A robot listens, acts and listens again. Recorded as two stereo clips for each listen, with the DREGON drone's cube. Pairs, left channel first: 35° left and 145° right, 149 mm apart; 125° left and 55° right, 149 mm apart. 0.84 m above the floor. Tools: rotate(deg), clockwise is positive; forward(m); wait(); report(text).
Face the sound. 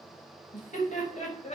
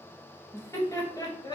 rotate(-65)
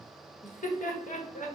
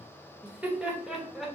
rotate(-35)
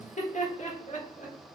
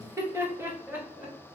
rotate(-20)
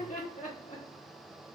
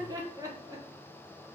rotate(-10)
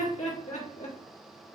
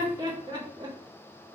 report("Facing the laughter, 2 to 4 m away.")